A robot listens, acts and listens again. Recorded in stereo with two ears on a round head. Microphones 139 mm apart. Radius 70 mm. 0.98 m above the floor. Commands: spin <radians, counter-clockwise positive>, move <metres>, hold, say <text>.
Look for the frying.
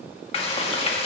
spin 0.70
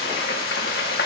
spin 1.75
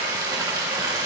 spin -0.44
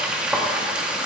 spin -0.17
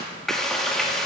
say Facing the frying.